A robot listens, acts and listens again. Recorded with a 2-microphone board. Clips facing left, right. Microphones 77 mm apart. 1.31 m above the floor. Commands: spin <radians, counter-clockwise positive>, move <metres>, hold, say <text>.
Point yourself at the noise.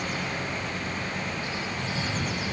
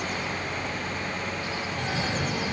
spin -1.13
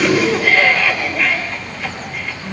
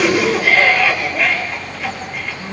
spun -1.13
say Found it: a cough, straight ahead.